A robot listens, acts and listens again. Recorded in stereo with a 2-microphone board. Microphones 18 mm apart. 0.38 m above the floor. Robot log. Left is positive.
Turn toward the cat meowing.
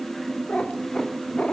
cmd yaw +90
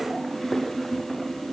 cmd idle
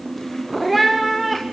end: Found it: a cat meowing, straight ahead.